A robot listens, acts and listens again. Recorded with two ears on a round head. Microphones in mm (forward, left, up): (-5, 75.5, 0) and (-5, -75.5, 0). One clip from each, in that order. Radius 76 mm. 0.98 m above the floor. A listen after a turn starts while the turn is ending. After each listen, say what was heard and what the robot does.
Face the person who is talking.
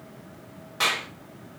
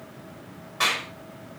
Keep listening.
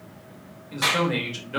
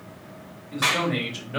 The man speaking: about 60° left or 120° left. Turn 60° left.
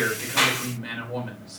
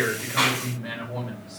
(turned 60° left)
So it is at 60° left. Turn 60° left.
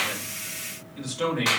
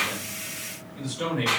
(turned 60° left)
The man speaking is now 30° left. Turn 30° left.
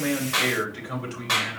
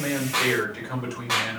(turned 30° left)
The man speaking is now 10° right. Turn 10° right.
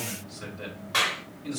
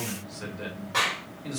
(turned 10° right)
Found it: a man speaking, straight ahead, 2 to 4 m away.